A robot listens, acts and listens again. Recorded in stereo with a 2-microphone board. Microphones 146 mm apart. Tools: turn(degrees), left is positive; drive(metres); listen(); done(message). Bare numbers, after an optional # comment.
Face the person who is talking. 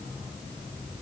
listen()
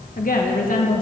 # The woman speaking: about 70° left or 110° left.
turn(70)
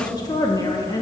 # So it is at 30° left.
turn(30)
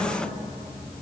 # The woman speaking is now 10° left.
turn(10)
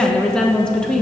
done("Found it: a woman speaking, straight ahead.")